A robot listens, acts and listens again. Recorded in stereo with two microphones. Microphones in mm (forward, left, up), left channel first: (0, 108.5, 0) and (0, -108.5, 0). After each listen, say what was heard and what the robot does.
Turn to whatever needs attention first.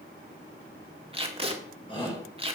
The shout: about 20° left or 160° left. Turn 20° left.
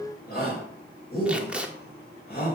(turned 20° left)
So it is at 135° left. Turn 135° left.
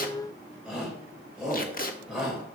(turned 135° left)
Found it: a shout, straight ahead.